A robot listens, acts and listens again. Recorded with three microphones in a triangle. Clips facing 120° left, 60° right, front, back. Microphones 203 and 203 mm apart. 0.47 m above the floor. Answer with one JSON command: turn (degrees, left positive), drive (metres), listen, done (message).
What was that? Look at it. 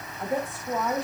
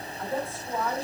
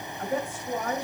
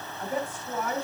{"turn": 50}
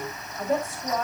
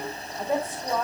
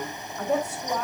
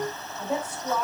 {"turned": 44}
{"turn": 10}
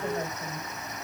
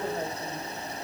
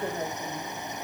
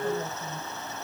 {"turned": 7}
{"turn": 10}
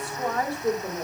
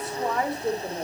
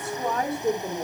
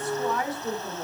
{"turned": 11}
{"turn": 15}
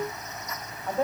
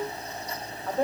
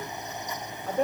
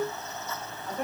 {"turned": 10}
{"turn": 15}
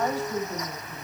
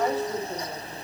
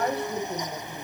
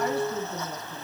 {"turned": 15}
{"done": "Facing the woman speaking."}